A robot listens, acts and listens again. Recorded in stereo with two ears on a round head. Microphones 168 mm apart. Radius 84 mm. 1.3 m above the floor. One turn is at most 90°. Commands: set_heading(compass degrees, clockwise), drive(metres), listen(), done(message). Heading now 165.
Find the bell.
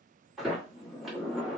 listen()
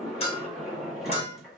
set_heading(130)
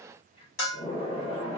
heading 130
set_heading(40)
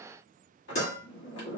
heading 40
set_heading(20)
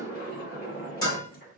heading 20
set_heading(0)
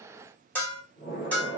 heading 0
set_heading(350)
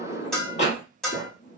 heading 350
done("Found it: a bell, straight ahead, 1 to 2 m away.")